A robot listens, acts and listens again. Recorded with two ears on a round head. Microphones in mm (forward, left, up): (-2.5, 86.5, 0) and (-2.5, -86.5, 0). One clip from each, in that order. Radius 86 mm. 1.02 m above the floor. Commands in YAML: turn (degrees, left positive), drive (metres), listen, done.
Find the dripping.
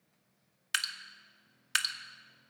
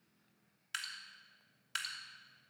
turn: 40
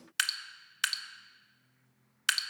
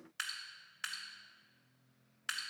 turn: 95
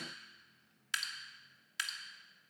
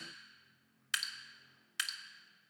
turn: -15
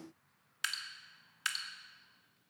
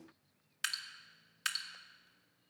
done: "Facing the dripping."